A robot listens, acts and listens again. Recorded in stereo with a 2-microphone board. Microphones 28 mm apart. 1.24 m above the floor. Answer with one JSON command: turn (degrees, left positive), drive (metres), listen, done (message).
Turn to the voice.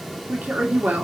{"turn": -75}
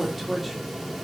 {"done": "Facing the woman speaking, 2 to 4 m away."}